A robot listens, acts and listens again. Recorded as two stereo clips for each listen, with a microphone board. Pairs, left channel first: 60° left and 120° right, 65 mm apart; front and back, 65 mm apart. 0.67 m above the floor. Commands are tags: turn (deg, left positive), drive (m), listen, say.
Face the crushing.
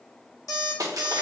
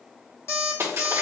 <turn deg="-135"/>
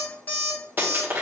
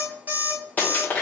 <turn deg="-65"/>
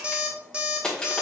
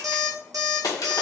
<turn deg="-15"/>
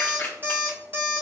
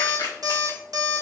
<say>Found it: crushing, straight ahead.</say>